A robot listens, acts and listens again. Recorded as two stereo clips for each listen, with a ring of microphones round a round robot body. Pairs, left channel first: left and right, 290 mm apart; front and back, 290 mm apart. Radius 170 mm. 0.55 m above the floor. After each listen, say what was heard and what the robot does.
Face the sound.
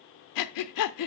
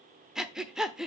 The breathing: 90° left. Turn 90° left.
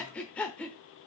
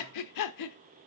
Facing the breathing, under 1 m away.